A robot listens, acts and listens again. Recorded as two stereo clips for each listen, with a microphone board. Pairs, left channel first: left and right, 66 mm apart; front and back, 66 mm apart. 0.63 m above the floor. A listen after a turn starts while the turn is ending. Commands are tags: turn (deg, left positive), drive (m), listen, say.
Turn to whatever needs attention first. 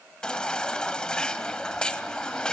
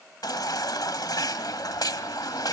<turn deg="15"/>
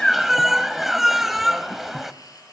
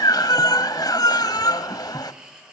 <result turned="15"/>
<say>Found it: a baby crying, straight ahead, 1 to 2 m away.</say>